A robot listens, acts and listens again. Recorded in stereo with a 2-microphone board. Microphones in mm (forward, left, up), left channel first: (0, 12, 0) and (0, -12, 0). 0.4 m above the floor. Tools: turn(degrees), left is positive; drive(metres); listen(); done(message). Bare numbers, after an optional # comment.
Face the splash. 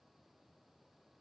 listen()
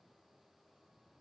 listen()
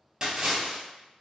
# The splash: about 30° right or 150° right.
turn(-30)
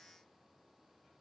listen()
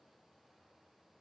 done("I heard a splash, but can't make it out now. It was about straight ahead or 120° right.")